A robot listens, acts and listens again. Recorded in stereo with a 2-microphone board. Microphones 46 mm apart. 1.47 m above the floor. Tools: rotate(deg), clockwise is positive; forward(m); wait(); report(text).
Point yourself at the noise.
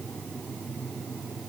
wait()
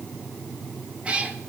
rotate(25)
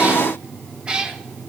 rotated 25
rotate(15)
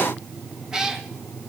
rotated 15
rotate(30)
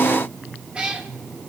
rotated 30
rotate(25)
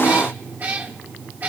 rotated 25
rotate(140)
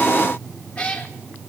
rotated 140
rotate(-30)
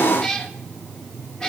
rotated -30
rotate(-15)
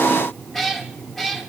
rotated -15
report("Found it: a cat meowing, straight ahead.")